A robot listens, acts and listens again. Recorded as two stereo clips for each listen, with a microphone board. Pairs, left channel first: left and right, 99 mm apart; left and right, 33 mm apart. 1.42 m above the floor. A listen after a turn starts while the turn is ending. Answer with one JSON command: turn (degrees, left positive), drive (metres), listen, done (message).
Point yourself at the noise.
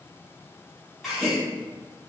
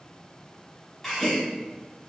{"turn": 30}
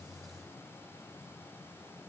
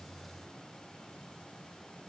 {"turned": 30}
{"listen": true}
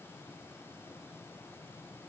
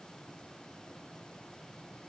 {"done": "I heard a gasp, but can't make it out now. It was about 30° right or 150° left."}